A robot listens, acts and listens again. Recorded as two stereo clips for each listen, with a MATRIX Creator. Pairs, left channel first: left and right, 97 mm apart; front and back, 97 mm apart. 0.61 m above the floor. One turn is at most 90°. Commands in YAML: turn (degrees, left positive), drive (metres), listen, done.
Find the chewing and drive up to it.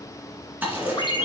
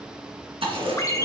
turn: -90
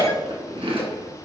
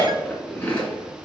turn: -75
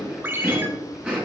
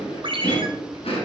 turn: -15
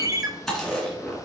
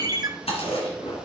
drive: 1.0
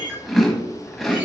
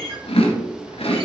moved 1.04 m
drive: 1.0
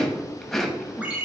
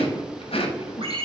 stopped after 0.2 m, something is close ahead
done: "I am next to the chewing."